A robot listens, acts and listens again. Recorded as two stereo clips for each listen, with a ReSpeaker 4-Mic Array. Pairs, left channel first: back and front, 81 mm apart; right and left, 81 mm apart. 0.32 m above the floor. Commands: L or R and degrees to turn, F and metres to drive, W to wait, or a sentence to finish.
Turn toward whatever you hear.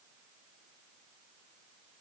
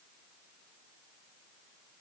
W
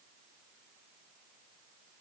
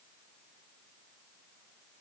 W
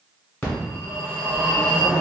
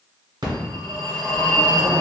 L110
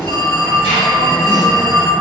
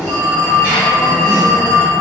L20
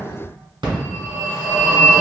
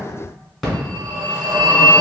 Found it: a phone ringing, straight ahead.